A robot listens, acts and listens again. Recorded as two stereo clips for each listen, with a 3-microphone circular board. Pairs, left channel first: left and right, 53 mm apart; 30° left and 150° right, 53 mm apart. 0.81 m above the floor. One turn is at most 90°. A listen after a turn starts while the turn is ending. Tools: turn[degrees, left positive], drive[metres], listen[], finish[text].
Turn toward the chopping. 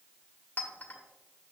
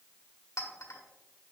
Action: listen[]
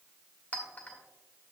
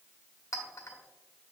Action: listen[]
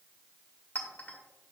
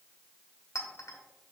Action: finish[I can't make out chopping to turn to.]